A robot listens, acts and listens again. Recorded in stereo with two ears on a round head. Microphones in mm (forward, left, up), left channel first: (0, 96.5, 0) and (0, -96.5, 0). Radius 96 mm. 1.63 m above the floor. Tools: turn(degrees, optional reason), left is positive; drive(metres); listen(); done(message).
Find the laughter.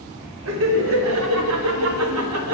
turn(degrees=-90)
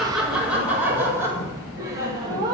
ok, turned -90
turn(degrees=-20, reason="So it is at 20° right.")
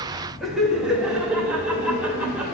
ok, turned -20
done("Found it: laughter, straight ahead, 2 to 4 m away.")